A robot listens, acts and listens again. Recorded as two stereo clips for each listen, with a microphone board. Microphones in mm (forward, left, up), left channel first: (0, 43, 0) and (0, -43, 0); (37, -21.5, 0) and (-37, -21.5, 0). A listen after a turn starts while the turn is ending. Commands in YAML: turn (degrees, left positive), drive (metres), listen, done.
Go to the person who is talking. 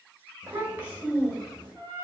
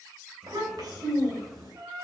turn: -160
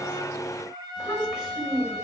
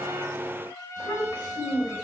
drive: 1.0
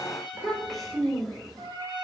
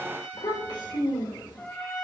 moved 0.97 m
drive: 1.0
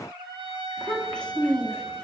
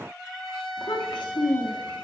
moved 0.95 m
turn: 10
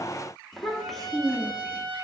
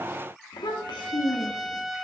drive: 1.0
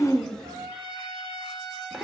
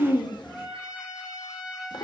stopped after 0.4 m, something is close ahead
done: "I am next to the child speaking."